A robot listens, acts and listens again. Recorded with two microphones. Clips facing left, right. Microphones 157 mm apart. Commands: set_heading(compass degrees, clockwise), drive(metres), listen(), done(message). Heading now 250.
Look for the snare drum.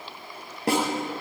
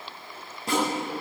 set_heading(160)
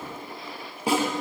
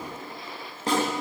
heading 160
set_heading(150)
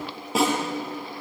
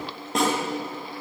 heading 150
done("Found it: a snare drum, straight ahead, over 4 m away.")